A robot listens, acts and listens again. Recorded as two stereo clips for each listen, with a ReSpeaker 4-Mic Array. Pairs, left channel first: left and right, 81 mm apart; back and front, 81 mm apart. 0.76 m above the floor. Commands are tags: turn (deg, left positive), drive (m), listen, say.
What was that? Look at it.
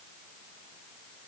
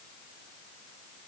<listen/>
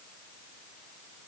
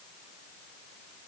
<listen/>
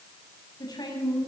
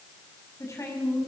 <turn deg="125"/>
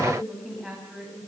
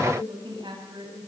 <say>Found it: a woman speaking, straight ahead, over 4 m away.</say>